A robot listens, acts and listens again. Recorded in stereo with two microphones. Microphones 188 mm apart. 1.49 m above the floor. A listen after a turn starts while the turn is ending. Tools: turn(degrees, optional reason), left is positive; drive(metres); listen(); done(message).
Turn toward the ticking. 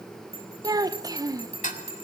turn(degrees=40, reason="The ticking: about 40° left or 140° left.")
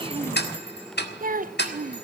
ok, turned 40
turn(degrees=95, reason="So it is at 95° left.")
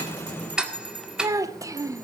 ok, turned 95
done("Found it: ticking, straight ahead.")